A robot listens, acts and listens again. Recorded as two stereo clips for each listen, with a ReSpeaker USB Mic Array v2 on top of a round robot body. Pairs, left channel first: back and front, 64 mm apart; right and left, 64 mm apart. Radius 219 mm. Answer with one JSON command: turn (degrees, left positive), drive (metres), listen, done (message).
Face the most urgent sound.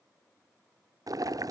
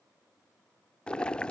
{"listen": true}
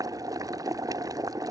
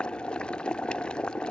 {"listen": true}
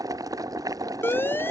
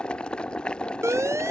{"turn": 130}
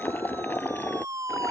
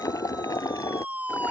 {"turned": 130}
{"turn": 25}
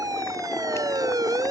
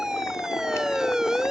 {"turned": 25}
{"turn": 10}
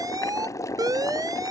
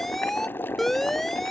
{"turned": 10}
{"done": "Facing the siren."}